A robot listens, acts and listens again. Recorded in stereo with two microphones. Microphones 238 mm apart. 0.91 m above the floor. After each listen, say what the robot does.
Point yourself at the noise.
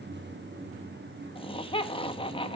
Turn 25° left.
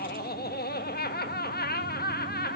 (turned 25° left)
Turn 130° left.
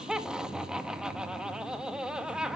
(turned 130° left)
Found it: laughter, straight ahead.